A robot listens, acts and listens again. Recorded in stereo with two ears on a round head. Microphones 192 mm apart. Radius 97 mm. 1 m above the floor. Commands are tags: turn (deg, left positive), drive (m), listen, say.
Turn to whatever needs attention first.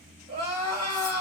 <turn deg="-25"/>
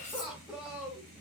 <say>Facing the crying, 1 to 2 m away.</say>